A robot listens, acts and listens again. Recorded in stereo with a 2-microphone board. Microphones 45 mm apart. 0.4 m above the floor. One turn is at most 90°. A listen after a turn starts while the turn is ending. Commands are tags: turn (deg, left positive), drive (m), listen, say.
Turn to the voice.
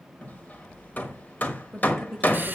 <turn deg="30"/>
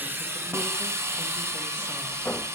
<listen/>
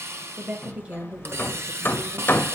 <turn deg="-30"/>
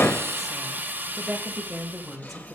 <say>Facing the woman speaking.</say>